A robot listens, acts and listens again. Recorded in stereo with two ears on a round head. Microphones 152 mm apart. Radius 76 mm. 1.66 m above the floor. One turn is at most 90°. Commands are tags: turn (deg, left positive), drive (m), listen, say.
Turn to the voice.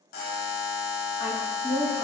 <turn deg="50"/>
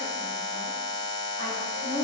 <turn deg="20"/>
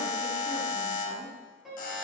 <listen/>
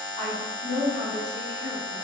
<turn deg="15"/>
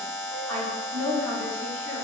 <say>Found it: a woman speaking, straight ahead.</say>